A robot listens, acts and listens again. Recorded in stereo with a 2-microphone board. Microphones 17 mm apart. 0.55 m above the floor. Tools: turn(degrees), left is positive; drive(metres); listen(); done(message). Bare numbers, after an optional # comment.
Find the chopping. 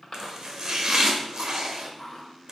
# The chopping: about 50° right or 130° right.
turn(-50)
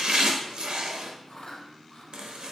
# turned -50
# So it is at 85° right.
turn(-85)
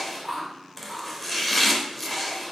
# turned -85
# The chopping is now 10° left.
turn(10)
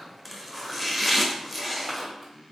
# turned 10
done("Facing the chopping.")